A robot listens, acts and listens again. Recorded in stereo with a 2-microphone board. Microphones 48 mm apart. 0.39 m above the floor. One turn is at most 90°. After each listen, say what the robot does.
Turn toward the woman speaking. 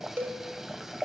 Keep listening.
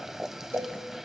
Keep listening.
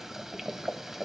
I can't make out a woman speaking, only a cowbell and boiling.